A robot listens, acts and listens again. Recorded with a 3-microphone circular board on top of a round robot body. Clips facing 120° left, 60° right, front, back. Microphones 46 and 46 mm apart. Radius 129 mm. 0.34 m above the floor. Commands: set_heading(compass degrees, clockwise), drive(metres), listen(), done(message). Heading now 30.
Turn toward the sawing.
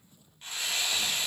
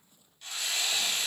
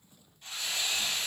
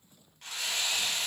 set_heading(210)
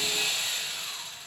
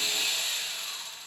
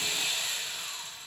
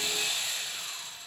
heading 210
set_heading(170)
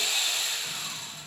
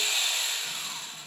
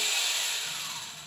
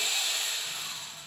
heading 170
set_heading(190)
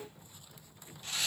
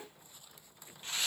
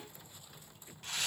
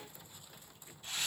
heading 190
done("Facing the sawing.")